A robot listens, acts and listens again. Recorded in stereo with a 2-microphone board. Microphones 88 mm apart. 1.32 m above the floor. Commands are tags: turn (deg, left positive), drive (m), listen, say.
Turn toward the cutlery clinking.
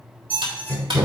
<turn deg="-65"/>
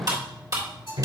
<turn deg="-45"/>
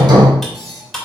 <say>Found it: cutlery clinking, straight ahead.</say>